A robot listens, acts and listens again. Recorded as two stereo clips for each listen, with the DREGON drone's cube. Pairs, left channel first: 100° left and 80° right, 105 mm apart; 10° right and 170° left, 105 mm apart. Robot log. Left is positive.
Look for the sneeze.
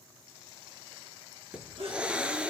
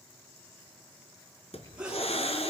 note: The sneeze: 110° right.
cmd yaw -110
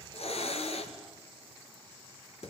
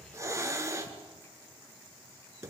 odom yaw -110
end: I heard a sneeze from this way, but can't make it out now.